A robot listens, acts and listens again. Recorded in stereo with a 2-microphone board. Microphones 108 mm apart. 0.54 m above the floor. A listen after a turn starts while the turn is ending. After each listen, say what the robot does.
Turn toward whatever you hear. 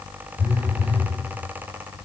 Turn 45° left.
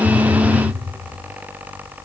Found it: a phone buzzing, straight ahead, 1 to 2 m away.